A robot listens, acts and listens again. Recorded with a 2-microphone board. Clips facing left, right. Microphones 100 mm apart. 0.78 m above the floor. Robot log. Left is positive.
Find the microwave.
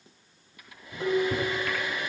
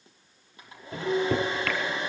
cmd yaw -90
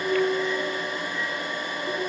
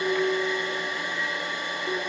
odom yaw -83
cmd idle
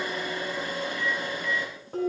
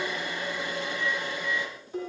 cmd idle
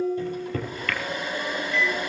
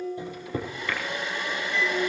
note: The microwave is now 15° right.
cmd yaw -15
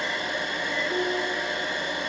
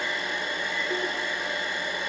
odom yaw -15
cmd idle
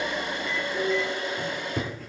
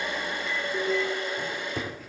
end: Facing the microwave.